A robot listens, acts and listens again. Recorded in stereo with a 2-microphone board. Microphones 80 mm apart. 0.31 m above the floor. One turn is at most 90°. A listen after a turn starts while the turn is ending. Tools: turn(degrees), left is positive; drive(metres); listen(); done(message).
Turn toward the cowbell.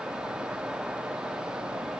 listen()
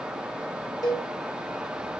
turn(degrees=55)
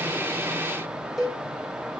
done("Facing the cowbell, 2 to 4 m away.")